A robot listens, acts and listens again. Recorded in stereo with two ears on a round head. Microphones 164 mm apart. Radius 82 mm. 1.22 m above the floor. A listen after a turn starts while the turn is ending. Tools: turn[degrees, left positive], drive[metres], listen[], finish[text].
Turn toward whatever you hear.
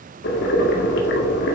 Thought: The boiling: about 65° left or 115° left.
Action: turn[65]
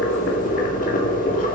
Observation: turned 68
Thought: So it is at 50° left.
Action: turn[50]
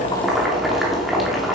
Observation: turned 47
Action: finish[Found it: boiling, straight ahead, 2 to 4 m away.]